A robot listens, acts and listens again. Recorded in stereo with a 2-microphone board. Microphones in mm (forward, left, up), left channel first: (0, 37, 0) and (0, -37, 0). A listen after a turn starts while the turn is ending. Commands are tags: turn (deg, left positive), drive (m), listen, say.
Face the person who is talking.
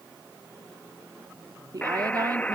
<turn deg="-55"/>
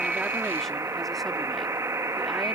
<listen/>
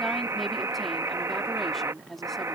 <say>Facing the woman speaking.</say>